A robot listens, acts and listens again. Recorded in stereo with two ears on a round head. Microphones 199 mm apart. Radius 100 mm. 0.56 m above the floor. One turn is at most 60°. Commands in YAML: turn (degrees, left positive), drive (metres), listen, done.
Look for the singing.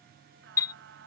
turn: -55
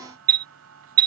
turn: -60
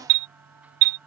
done: "Facing the singing."